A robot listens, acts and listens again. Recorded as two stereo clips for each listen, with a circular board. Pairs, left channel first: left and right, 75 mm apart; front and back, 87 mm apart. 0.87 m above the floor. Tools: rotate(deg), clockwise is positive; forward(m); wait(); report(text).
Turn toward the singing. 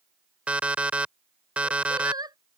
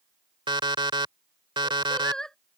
rotate(80)
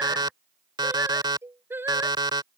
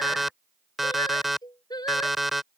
rotate(30)
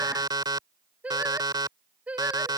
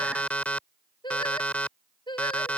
rotate(20)
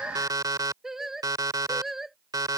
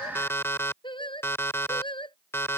report("Found it: singing, straight ahead.")